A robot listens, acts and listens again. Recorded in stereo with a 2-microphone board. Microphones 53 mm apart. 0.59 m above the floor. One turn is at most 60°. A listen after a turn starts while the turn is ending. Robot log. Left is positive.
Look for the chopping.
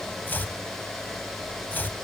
note: The chopping: about 40° left or 140° left.
cmd yaw +40
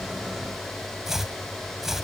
end: Facing the chopping, under 1 m away.